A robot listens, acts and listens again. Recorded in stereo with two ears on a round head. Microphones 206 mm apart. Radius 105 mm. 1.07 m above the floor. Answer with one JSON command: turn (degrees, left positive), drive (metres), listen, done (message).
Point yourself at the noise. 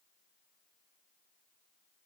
{"listen": true}
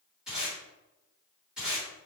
{"turn": -30}
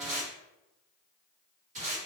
{"turn": -145}
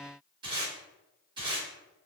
{"turn": -20}
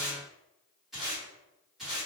{"done": "Found it: tape being pulled, straight ahead, 1 to 2 m away."}